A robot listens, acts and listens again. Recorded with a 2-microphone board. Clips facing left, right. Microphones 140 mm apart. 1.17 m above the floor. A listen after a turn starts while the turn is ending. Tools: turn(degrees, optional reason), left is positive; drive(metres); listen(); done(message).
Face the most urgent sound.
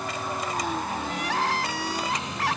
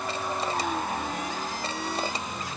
turn(degrees=90)
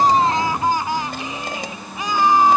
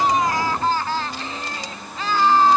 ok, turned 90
turn(degrees=15, reason="So it is at 15° left.")
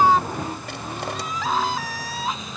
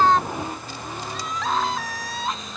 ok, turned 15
done("Facing the crying.")